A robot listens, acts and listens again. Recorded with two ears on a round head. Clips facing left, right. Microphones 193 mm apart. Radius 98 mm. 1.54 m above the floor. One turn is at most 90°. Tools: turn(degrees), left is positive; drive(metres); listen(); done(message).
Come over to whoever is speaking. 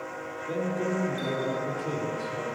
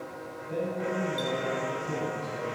turn(degrees=90)
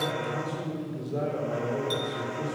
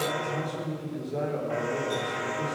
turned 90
drive(metres=1.0)
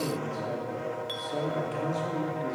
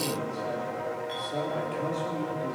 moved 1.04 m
drive(metres=1.0)
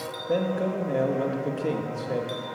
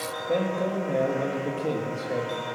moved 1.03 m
drive(metres=1.0)
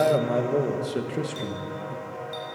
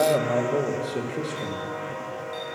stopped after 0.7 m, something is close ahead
turn(degrees=10)
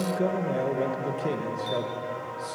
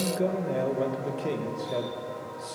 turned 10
done("I am next to the man speaking.")